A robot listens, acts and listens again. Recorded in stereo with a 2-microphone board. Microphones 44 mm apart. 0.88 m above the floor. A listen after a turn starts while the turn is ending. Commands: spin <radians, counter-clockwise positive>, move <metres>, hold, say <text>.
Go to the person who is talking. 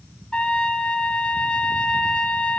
hold
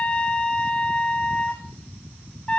hold
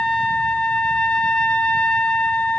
say I can't make out anyone speaking to turn to.